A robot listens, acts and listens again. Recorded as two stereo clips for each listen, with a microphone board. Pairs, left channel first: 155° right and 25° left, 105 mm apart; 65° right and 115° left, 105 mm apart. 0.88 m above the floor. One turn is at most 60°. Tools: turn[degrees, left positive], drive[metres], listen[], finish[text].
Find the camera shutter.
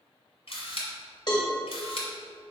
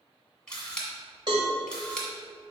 Thought: The camera shutter: 150° right.
Action: turn[-60]
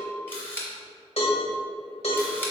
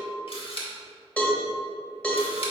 Thought: The camera shutter is now 90° right.
Action: turn[-60]
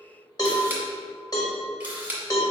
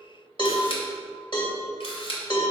Thought: The camera shutter is now 50° right.
Action: turn[-50]
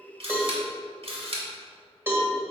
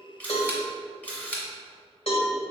Thought: The camera shutter is now 10° left.
Action: turn[10]
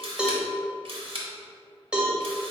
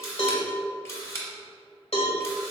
Action: finish[Facing the camera shutter.]